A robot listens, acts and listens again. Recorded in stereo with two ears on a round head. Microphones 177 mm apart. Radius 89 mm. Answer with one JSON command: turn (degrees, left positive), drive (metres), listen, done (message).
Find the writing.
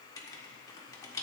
{"turn": 20}
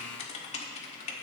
{"turn": 145}
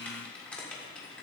{"done": "Found it: writing, straight ahead."}